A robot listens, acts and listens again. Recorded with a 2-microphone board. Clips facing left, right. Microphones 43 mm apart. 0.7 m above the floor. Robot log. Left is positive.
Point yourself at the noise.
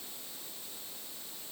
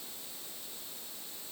cmd idle
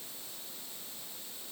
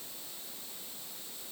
cmd idle
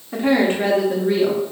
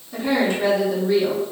note: The woman speaking: about 35° left or 145° left.
cmd yaw +35
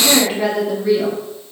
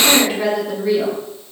note: So it is at 10° right.
cmd yaw -10
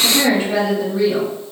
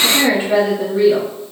note: The woman speaking is now 20° right.
cmd yaw -20
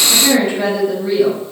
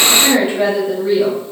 note: The woman speaking is now 10° right.
cmd yaw -10
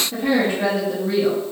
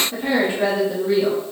end: Facing the woman speaking, 1 to 2 m away.